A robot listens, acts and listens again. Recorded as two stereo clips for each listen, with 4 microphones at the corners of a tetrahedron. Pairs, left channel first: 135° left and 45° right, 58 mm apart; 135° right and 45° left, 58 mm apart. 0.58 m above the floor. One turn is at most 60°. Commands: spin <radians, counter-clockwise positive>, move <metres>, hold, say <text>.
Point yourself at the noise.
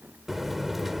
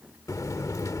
spin -1.05
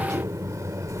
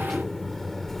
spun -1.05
spin -0.87
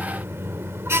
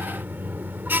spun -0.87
spin -0.17
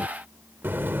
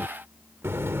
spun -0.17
say Found it: a buzzer, straight ahead.